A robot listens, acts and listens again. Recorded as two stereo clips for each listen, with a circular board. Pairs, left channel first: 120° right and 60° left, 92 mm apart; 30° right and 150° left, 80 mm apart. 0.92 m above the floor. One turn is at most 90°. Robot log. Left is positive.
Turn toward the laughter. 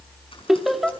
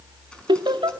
note: The laughter: 150° left.
cmd yaw +90
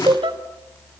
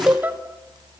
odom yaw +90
note: The laughter is now 85° left.
cmd yaw +85
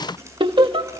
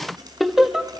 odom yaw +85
note: The laughter is now 70° left.
cmd yaw +70
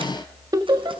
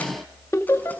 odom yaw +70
note: The laughter is now 20° left.
cmd yaw +20
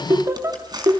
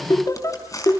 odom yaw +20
note: The laughter is now 10° left.
cmd yaw +10
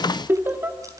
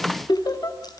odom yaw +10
end: Facing the laughter, 2 to 4 m away.